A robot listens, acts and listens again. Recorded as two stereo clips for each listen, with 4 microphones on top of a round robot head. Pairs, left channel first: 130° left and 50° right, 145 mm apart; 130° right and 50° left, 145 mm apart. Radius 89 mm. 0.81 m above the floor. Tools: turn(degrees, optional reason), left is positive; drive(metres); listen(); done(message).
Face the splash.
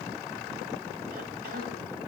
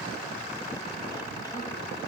listen()
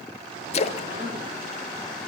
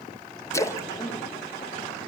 turn(degrees=165, reason="The splash: 165° left.")
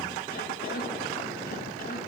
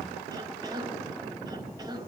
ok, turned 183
turn(degrees=-20, reason="Nothing new. It was at 20° right.")
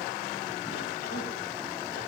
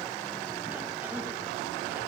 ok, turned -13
done("I heard a splash from this way, but can't make it out now.")